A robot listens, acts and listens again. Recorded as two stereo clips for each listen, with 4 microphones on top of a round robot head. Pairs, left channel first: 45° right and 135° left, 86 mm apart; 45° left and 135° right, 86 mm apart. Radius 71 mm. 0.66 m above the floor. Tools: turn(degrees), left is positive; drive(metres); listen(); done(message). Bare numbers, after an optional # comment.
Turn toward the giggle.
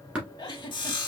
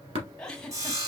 # The giggle: 30° right.
turn(-30)
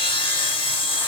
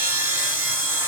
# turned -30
listen()
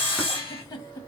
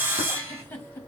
# The giggle is now 15° right.
turn(-15)
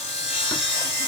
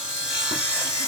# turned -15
listen()
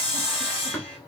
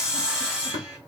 listen()
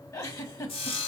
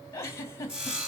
done("Facing the giggle, 1 to 2 m away.")